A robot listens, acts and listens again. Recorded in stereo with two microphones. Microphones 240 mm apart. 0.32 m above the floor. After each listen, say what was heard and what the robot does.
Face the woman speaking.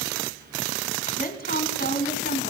The woman speaking: about 45° left or 135° left. Turn 45° left.
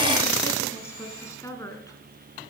So it is at 15° left. Turn 15° left.
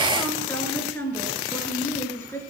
The woman speaking is now 10° left. Turn 10° left.
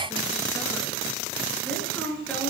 Facing the woman speaking.